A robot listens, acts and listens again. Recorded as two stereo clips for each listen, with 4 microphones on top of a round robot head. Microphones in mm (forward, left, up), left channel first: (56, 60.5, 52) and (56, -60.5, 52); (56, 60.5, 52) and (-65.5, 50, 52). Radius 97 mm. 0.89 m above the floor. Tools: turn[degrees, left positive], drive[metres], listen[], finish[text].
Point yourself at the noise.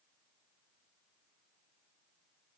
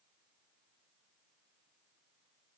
Action: listen[]
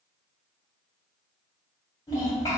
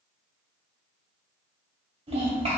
Thought: The child speaking: 155° left.
Action: turn[155]
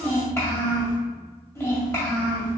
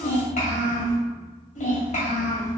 Thought: The child speaking is now 25° left.
Action: turn[25]
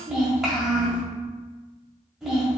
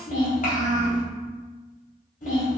Action: finish[Found it: a child speaking, straight ahead.]